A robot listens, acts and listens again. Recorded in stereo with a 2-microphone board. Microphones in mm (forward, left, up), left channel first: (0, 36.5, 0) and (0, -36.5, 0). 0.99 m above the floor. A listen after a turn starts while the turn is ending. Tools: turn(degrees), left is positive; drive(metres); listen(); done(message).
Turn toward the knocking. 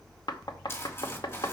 turn(degrees=90)
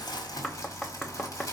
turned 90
turn(degrees=10)
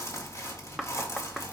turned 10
listen()
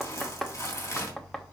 done("Found it: knocking, straight ahead.")